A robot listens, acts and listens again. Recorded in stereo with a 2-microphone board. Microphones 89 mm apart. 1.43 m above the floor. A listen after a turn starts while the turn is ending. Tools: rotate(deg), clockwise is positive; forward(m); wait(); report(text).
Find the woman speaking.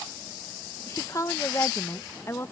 rotate(-30)
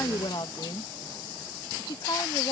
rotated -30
rotate(-125)
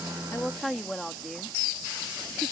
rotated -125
report("Found it: a woman speaking, straight ahead.")